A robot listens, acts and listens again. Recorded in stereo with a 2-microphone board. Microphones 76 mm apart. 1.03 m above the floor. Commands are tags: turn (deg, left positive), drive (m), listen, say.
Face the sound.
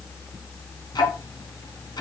<turn deg="75"/>
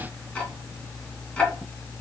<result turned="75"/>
<turn deg="20"/>
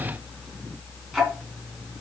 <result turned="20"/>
<say>Facing the ticking, 2 to 4 m away.</say>